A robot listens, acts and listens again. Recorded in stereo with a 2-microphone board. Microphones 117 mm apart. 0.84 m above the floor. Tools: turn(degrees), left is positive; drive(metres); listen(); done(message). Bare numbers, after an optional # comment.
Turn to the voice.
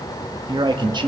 # The man speaking: about 40° right or 140° right.
turn(-40)
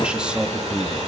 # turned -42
# So it is at 10° right.
turn(-10)
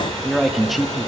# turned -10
done("Facing the man speaking.")